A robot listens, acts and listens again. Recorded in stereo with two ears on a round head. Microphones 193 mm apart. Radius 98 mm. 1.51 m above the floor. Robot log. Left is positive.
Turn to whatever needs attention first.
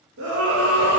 note: The scream: about 70° right or 110° right.
cmd yaw -70
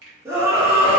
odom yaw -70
note: So it is at 15° right.
cmd yaw -15
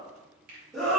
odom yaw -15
end: Found it: a scream, straight ahead, 1 to 2 m away.